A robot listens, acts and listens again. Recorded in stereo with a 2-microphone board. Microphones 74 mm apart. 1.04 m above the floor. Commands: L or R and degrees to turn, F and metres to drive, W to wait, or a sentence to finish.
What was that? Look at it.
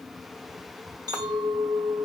R70
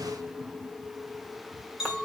Facing the clink, 2 to 4 m away.